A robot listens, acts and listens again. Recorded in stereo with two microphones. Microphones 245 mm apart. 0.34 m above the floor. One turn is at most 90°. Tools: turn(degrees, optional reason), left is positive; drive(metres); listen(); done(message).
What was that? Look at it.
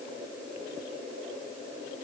listen()
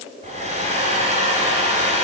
turn(degrees=-25, reason="The hair dryer: about 25° right or 155° right.")
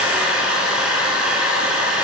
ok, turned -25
done("Found it: a hair dryer, straight ahead, 1 to 2 m away.")